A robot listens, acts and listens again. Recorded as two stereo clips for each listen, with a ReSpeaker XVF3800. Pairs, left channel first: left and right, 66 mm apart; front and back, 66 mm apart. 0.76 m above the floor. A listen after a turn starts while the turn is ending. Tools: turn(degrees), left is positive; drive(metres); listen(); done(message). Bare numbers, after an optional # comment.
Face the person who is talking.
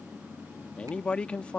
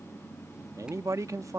# The man speaking: 160° left.
turn(160)
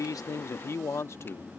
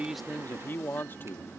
# The man speaking is now 50° left.
turn(50)
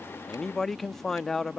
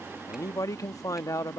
done("Facing the man speaking.")